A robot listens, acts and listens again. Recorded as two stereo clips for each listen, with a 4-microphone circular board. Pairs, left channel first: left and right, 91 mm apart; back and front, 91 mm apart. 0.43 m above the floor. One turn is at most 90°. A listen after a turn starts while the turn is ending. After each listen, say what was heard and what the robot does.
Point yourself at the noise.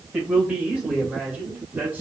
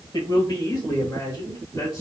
The man speaking: 150° right. Turn 90° right.
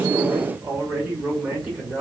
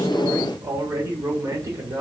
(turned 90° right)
The man speaking is now 25° right. Turn 25° right.
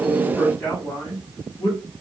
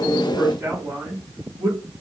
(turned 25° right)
The man speaking is now 45° left. Turn 45° left.
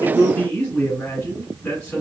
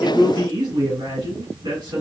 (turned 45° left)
The man speaking is now 15° left. Turn 15° left.
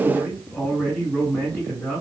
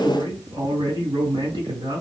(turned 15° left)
Facing the man speaking, 1 to 2 m away.